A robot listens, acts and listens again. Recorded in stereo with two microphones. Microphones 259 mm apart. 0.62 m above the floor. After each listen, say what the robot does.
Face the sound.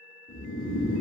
Turn 45° left.
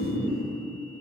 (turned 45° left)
Facing the snoring.